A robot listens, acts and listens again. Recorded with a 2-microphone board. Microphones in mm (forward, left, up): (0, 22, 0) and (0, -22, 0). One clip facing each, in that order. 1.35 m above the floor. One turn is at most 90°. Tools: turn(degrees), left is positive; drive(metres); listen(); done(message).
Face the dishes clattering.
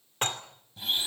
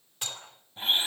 turn(degrees=45)
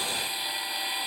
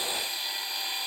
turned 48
listen()
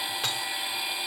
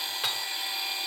done("Facing the dishes clattering, 2 to 4 m away.")